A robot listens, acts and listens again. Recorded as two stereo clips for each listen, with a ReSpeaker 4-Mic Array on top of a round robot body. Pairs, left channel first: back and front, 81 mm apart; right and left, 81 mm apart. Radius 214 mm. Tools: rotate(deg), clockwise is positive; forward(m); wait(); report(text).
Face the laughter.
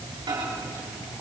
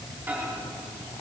wait()
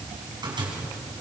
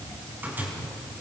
wait()
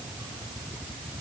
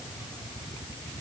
report("I can't make out laughter, only a microwave.")